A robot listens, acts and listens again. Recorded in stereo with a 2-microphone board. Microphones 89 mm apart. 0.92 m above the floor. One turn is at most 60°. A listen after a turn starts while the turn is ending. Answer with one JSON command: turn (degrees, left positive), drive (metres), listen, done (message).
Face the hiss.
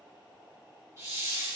{"turn": -30}
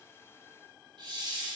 {"turn": -60}
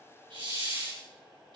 {"turn": -60}
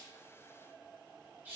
{"turn": -20}
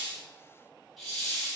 {"done": "Found it: a hiss, straight ahead, over 4 m away."}